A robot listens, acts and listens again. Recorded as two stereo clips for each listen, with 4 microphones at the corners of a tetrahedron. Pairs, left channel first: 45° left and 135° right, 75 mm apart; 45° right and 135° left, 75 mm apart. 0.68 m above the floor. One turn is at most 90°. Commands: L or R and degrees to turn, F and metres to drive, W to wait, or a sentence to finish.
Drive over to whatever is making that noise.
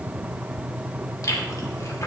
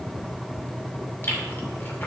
L10
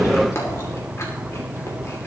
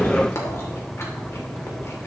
F1.0
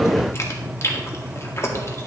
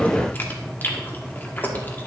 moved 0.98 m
L10
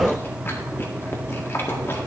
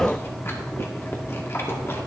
F1.0
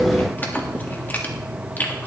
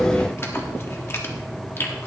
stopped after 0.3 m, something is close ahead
R10
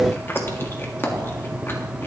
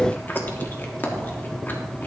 I am next to the chewing.